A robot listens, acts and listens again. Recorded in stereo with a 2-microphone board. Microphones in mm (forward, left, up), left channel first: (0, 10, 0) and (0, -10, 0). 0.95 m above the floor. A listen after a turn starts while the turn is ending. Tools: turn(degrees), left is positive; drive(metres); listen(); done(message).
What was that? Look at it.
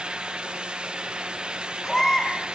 turn(degrees=20)
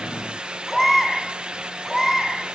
done("Found it: a baby crying, straight ahead.")